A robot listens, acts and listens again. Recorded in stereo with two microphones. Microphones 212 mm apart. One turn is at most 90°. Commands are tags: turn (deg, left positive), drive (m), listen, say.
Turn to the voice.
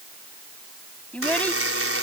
<turn deg="30"/>
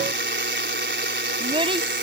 <turn deg="-25"/>
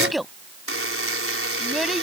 <say>Facing the child speaking.</say>